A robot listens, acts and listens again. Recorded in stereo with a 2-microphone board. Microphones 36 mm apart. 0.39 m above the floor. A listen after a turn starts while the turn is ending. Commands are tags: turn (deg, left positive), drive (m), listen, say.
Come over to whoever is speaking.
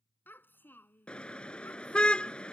<turn deg="75"/>
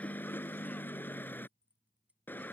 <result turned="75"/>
<listen/>
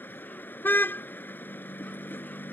<listen/>
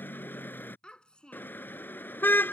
<turn deg="30"/>
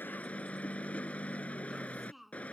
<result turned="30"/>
<drive m="1.0"/>
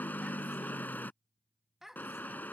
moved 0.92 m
<turn deg="-10"/>
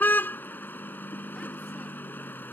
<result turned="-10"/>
<listen/>
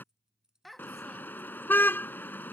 <drive m="1.0"/>
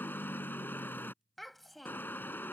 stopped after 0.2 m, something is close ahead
<say>I am next to the child speaking.</say>